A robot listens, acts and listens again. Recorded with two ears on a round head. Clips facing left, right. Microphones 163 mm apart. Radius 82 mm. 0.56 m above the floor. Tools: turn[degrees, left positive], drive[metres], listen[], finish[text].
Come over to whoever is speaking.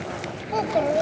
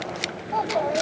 Thought: The child speaking: about 35° left or 145° left.
Action: turn[35]
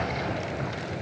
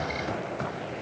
Action: listen[]
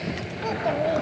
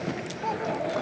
Thought: So it is at 110° left.
Action: turn[110]
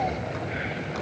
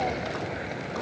Action: listen[]
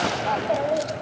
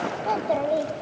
Action: drive[1.0]
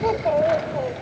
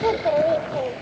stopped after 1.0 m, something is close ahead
Thought: The child speaking is now 10° right.
Action: turn[-10]
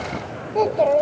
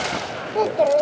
Action: finish[I am next to the child speaking.]